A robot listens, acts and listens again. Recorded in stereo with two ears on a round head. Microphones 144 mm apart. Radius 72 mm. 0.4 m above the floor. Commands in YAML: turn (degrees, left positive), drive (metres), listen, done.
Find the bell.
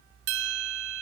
turn: -75
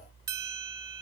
turn: -20
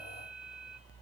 listen: true
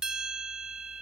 done: "Found it: a bell, straight ahead."